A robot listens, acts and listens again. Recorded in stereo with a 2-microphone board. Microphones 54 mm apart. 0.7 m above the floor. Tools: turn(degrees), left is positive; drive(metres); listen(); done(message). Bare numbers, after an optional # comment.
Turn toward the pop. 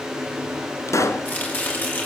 # The pop: about 65° left or 115° left.
turn(65)
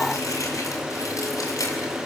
listen()
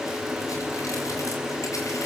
done("I heard a pop, but can't make it out now. It was about straight ahead or 50° left.")